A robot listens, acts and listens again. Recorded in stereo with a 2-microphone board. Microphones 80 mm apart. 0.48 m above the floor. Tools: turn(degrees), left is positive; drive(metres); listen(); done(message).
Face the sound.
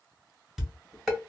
turn(degrees=-30)
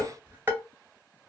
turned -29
turn(degrees=-145)
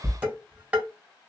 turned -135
turn(degrees=-15)
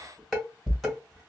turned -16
done("Found it: dishes clattering, straight ahead, 1 to 2 m away.")